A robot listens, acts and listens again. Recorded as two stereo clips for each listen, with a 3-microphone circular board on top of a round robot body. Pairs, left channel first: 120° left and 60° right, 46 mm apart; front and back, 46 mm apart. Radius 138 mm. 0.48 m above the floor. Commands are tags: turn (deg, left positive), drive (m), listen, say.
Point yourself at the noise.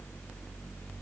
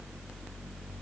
<listen/>
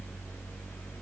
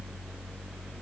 <listen/>
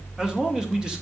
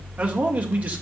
<turn deg="-130"/>
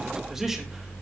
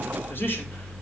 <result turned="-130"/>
<listen/>
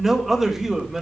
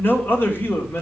<turn deg="25"/>
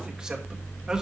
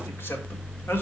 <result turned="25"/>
<turn deg="10"/>
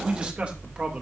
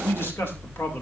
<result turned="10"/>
<say>Facing the man speaking, 2 to 4 m away.</say>